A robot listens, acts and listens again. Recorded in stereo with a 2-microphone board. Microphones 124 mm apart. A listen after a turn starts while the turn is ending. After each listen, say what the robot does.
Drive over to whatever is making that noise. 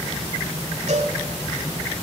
Turn 90° right.
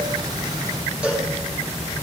Turn 10° right.
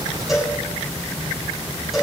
Drive 1.0 m forward.
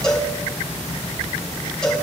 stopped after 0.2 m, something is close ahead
Something is in my way. I am facing the cowbell but have not reached it.